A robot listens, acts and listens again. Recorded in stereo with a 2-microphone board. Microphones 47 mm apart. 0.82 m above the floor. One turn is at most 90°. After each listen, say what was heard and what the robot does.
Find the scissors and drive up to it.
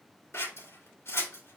The scissors: about 70° left or 110° left. Turn 70° left.
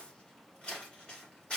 So it is at 30° left. Turn 30° left.
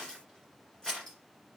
The scissors is now 15° left. Turn 15° left.
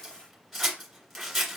Drive 1.0 m forward.
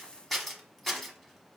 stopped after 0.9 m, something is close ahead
I am next to the scissors.